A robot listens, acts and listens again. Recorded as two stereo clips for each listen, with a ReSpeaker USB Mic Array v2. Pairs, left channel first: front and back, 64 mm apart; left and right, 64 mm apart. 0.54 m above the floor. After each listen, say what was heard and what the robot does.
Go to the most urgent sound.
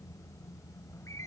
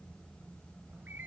Keep listening.
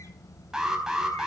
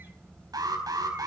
The alarm: 100° right. Turn 100° right.
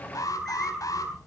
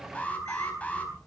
The alarm is now 20° left. Turn 20° left.
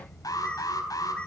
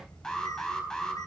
The alarm is now 10° left. Turn 10° left.
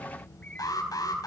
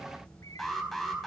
Drive 1.0 m forward.
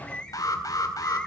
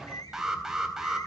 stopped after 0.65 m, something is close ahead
The alarm is now 10° right. Turn 10° right.
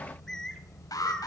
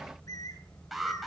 Something is in my way. I am facing the alarm but have not reached it.